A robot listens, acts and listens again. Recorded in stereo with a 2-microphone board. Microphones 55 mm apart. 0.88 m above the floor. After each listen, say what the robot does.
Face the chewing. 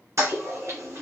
Keep listening.
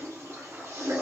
Keep listening.
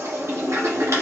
I can't make out chewing, only a toilet flushing.